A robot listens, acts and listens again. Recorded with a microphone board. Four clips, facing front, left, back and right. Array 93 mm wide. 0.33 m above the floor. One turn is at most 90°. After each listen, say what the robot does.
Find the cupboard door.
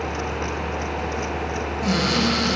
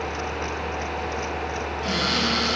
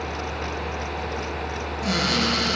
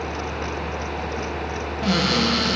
Turn 60° right.
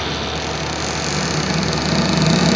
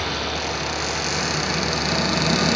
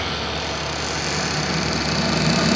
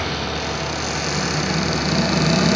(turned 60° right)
Found it: a cupboard door, straight ahead, over 4 m away.